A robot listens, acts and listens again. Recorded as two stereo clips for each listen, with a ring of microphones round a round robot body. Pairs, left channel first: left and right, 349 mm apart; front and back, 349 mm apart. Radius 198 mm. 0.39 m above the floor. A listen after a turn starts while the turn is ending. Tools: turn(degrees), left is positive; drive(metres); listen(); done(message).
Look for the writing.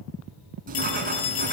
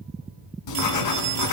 turn(degrees=-20)
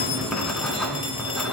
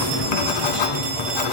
done("Facing the writing, 2 to 4 m away.")